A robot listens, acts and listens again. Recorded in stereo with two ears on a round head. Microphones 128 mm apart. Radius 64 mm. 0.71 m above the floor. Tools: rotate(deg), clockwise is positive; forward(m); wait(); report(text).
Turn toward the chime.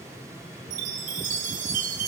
rotate(60)
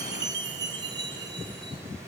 rotate(35)
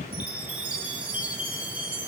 rotate(10)
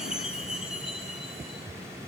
report("Found it: a chime, straight ahead, under 1 m away.")